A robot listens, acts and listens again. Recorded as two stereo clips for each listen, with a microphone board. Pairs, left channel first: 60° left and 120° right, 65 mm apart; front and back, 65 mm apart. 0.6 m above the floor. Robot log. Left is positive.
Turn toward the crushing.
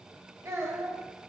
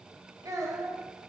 cmd idle
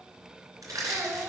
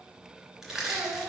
note: The crushing: 95° right.
cmd yaw -95
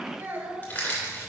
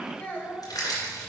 end: Facing the crushing.